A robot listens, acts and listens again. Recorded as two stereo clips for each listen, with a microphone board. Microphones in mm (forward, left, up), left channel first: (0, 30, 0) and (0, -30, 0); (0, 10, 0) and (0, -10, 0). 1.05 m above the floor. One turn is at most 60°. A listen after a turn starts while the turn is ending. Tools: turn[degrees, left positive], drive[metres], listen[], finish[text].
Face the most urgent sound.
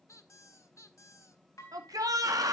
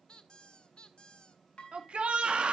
Thought: The shout: about 75° right or 105° right.
Action: turn[-60]
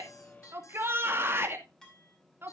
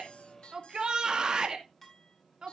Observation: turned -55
Thought: So it is at 40° right.
Action: turn[-40]
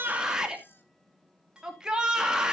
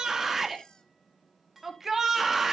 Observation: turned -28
Thought: The shout is now 15° right.
Action: turn[-15]
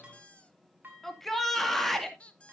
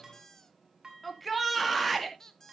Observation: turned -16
Action: finish[Found it: a shout, straight ahead, 2 to 4 m away.]